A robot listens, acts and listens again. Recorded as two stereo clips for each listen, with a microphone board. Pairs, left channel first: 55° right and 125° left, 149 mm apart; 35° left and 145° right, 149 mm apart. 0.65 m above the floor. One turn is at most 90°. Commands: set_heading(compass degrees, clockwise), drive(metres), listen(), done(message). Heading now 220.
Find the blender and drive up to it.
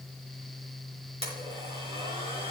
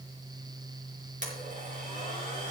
set_heading(130)
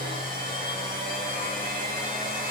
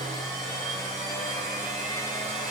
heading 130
set_heading(40)
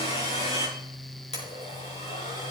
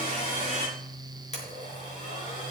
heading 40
set_heading(50)
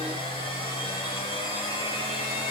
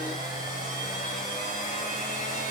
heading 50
drive(1.0)
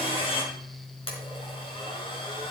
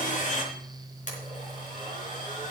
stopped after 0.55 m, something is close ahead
done("Something is in my way. I am facing the blender but have not reached it.")